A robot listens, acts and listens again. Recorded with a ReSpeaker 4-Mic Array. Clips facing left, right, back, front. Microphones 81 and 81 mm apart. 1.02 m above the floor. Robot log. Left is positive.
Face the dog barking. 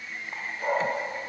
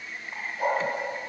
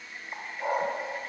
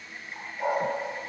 note: The dog barking: 80° right.
cmd yaw -80
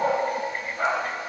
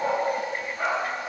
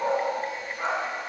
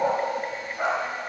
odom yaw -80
note: The dog barking is now 10° left.
cmd yaw +10
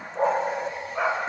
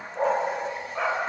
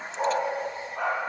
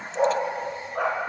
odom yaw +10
end: Facing the dog barking, 2 to 4 m away.